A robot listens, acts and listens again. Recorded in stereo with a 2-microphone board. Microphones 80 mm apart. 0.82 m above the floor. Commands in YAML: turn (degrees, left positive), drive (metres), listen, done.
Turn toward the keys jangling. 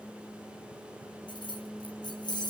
turn: 65
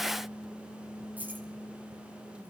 listen: true
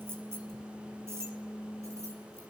listen: true
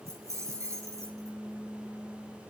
turn: -35
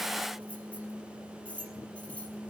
turn: 15
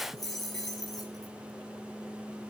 done: "Facing the keys jangling."